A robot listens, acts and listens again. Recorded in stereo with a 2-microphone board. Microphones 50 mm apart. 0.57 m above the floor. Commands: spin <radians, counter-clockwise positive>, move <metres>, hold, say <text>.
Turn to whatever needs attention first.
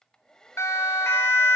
spin 1.13
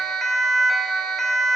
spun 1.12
say Facing the siren, 2 to 4 m away.